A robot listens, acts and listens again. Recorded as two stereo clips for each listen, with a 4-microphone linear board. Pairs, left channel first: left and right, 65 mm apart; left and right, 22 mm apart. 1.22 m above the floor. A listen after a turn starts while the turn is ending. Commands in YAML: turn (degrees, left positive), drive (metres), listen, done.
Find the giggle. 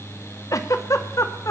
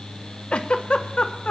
turn: 55
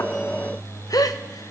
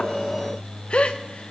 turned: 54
turn: 70
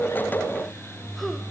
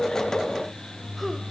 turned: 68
listen: true
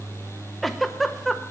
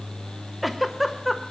done: "Facing the giggle, under 1 m away."